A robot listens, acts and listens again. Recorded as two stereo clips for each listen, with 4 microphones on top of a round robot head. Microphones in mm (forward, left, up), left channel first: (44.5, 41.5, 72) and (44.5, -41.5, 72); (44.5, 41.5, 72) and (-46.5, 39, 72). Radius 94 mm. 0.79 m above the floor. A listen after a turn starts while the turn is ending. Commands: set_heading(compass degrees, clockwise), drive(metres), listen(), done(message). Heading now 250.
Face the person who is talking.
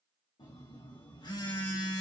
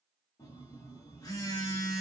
listen()
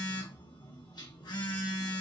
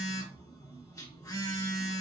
listen()
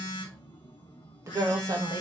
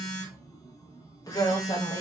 set_heading(290)
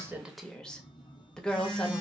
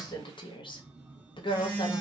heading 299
set_heading(289)
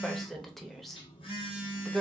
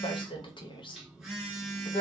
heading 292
done("Found it: a woman speaking, straight ahead.")